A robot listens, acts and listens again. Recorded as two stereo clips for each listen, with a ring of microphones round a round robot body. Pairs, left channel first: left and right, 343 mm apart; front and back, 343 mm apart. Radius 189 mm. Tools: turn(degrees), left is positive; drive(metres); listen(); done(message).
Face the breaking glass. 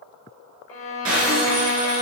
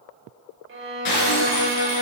turn(degrees=-35)
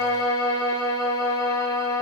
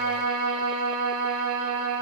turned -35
done("I heard breaking glass from this way, but can't make it out now.")